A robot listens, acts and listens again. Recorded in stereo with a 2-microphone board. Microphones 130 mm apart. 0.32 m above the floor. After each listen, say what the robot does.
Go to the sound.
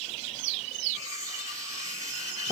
Turn 25° right.
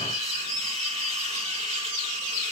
Turn 130° right.
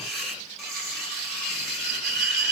Drive 1.0 m forward.
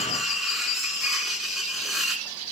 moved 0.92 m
Drive 1.0 m forward.
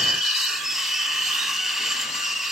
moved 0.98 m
Drive 1.0 m forward.
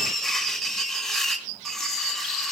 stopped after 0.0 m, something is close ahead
Arrived at the cutlery clinking, straight ahead.